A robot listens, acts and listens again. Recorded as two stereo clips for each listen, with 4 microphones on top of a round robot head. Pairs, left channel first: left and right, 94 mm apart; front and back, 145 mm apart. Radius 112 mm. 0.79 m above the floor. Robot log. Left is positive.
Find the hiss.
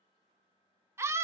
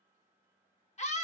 cmd idle
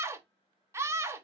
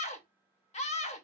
cmd idle
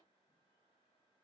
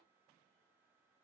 end: I can't make out a hiss, only a scream.